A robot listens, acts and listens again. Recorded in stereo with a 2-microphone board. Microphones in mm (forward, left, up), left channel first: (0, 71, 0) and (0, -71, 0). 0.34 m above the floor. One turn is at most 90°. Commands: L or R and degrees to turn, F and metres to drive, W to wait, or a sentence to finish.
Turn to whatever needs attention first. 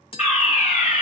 L60
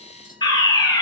L35
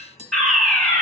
L10
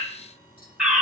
Found it: a fire alarm, straight ahead.